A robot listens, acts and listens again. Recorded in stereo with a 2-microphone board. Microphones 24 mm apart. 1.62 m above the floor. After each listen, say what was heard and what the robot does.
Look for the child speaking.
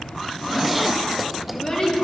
The child speaking: about 35° left or 145° left. Turn 35° left.
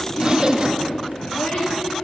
So it is at 100° left. Turn 100° left.
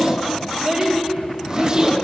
The child speaking is now 30° right. Turn 30° right.
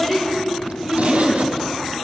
The child speaking is now 10° left. Turn 10° left.
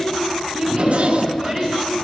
Found it: a child speaking, straight ahead.